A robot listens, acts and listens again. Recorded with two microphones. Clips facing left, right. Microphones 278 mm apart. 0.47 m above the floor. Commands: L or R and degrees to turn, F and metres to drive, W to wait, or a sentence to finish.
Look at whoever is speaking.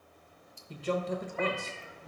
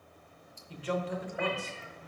L45
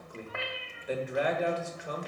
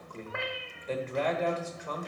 L15
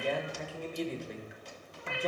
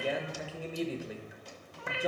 Found it: a man speaking, straight ahead.